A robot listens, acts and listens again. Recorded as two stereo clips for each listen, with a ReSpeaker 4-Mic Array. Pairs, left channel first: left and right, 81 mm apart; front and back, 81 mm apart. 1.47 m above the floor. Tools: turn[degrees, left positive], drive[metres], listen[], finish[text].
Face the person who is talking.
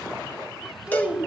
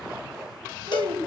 Thought: The child speaking: 160° right.
Action: turn[-160]
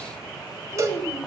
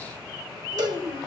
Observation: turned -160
Thought: The child speaking is now 35° left.
Action: turn[35]
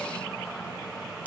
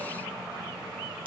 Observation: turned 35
Action: listen[]
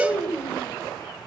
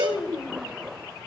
Thought: The child speaking is now 15° left.
Action: turn[15]
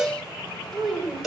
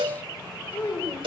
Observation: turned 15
Action: finish[Found it: a child speaking, straight ahead, over 4 m away.]